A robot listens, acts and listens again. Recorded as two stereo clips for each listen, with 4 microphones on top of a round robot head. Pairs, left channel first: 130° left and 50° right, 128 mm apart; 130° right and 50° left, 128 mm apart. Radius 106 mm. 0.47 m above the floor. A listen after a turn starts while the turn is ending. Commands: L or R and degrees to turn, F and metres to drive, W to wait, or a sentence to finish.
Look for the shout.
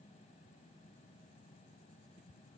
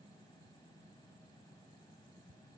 W
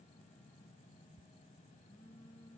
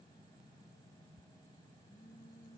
W
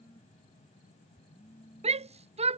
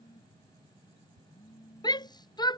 R80
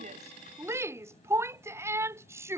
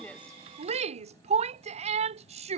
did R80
L20
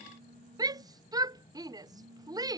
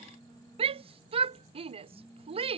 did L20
L10
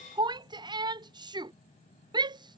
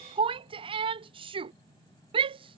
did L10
Found it: a shout, straight ahead.